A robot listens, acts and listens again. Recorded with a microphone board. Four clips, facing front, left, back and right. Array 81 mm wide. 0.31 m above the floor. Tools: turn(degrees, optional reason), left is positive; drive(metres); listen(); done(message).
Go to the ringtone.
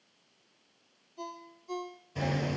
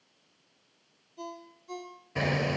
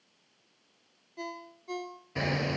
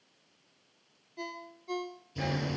turn(degrees=-145, reason="The ringtone: 145° right.")
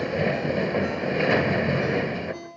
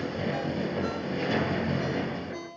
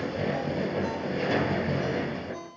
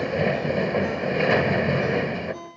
turn(degrees=45, reason="The ringtone is now 45° left.")
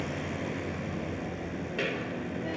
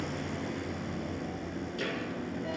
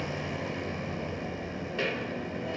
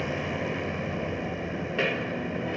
listen()
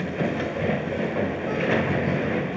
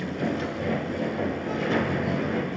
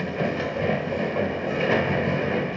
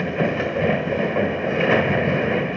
listen()
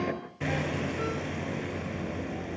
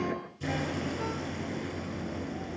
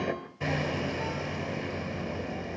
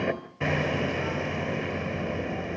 done("Facing where the ringtone came from. I can't hear it now. I did not reach it.")